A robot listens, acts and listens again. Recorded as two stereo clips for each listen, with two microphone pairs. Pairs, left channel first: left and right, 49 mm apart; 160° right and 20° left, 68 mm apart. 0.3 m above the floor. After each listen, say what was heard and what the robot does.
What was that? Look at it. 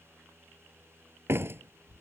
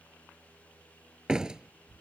The door slam: 60° right. Turn 60° right.
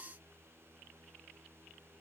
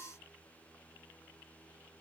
I heard a door slam from this way, but can't make it out now.